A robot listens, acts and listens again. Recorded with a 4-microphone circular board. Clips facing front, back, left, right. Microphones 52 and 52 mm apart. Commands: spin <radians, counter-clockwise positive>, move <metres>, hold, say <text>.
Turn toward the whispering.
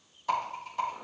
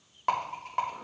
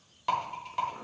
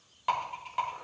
hold
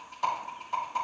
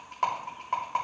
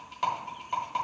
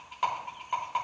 hold
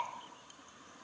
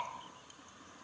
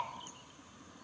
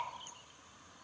say I can't make out whispering to turn to.